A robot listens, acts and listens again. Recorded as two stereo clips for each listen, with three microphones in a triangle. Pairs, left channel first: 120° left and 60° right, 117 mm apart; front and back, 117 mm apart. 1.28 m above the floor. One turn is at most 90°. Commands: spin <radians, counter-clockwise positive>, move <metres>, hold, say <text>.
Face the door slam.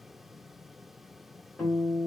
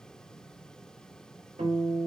hold
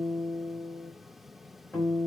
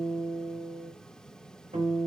hold
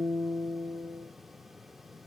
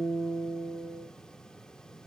say I can't make out a door slam to turn to.